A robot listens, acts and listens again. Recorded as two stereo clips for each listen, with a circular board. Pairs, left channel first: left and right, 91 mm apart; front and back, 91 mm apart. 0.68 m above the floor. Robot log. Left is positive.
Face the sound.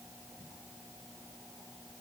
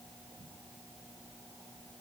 cmd idle
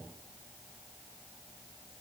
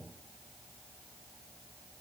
cmd idle
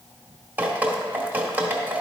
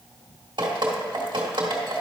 note: The dripping: 160° right.
cmd yaw -160
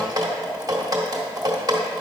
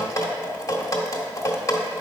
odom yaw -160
note: The dripping is now 50° right.
cmd yaw -50
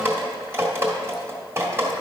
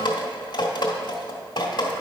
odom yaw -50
note: The dripping is now 30° right.
cmd yaw -30
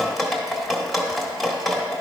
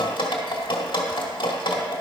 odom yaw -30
end: Facing the dripping.